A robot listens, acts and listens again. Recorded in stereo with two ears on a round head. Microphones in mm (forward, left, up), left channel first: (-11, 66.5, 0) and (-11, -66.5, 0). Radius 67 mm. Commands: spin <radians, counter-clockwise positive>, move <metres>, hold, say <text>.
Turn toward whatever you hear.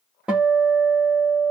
spin -0.52
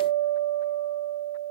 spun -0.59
spin 0.44
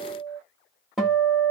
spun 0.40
say Facing the guitar.